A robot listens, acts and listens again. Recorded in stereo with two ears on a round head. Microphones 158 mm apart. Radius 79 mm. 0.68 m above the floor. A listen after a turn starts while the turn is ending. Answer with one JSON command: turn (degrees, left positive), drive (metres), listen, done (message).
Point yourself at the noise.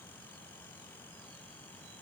{"listen": true}
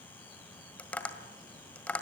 {"turn": 30}
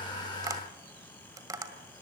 {"turn": -20}
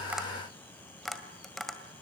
{"done": "Found it: tapping, straight ahead."}